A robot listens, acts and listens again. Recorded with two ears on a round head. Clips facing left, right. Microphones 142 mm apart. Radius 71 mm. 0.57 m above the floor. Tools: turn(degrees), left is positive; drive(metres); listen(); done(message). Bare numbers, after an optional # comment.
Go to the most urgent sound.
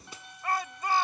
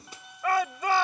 # The shout: about 65° right or 115° right.
turn(-65)
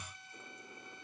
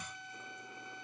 listen()
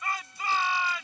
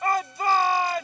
# So it is at 40° right.
turn(-40)
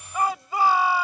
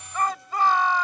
# The shout is now 10° left.
turn(10)
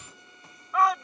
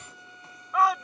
drive(1.0)
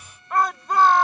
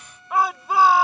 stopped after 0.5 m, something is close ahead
done("Something is in my way. I am facing the shout but have not reached it.")